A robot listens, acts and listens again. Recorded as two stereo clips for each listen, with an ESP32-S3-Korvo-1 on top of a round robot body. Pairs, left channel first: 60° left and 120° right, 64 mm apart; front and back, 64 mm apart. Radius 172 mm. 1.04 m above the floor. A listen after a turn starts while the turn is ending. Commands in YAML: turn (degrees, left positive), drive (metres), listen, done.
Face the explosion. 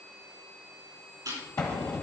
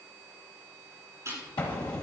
turn: 10
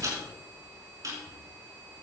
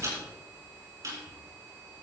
done: "Facing where the explosion came from. I can't hear it now."